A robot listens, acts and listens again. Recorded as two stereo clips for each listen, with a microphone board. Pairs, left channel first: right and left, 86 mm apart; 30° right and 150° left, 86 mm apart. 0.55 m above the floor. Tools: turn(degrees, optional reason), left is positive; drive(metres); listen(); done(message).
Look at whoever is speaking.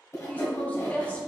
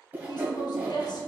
turn(degrees=-20, reason="The woman speaking: 20° right.")
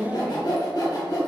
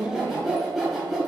done("Facing the woman speaking.")